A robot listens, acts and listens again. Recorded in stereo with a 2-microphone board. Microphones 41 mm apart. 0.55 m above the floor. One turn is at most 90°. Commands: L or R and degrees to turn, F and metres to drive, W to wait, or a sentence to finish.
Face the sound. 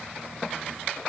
W
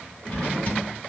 L40
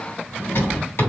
L90
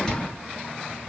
L10
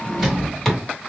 Facing the drawer, 1 to 2 m away.